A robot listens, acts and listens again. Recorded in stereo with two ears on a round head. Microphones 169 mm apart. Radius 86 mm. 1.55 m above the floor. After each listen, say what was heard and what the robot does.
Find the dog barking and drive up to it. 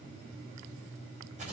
Keep listening.
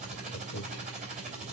Keep listening.
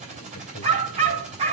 The dog barking: about 35° right or 145° right. Turn 35° right.
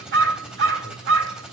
So it is at 110° right. Turn 110° right.
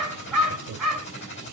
Drive 1.0 m forward.
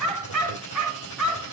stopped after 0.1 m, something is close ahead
Something is in my way. I am facing the dog barking but have not reached it.